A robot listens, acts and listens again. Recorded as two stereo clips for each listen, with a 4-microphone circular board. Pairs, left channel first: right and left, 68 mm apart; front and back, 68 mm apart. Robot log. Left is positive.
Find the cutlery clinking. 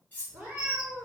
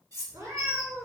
note: The cutlery clinking: 155° right.
cmd yaw -155
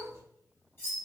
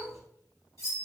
cmd idle
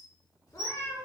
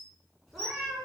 cmd idle
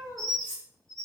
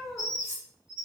note: The cutlery clinking is now 35° right.
cmd yaw -35
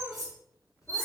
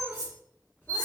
end: Facing the cutlery clinking.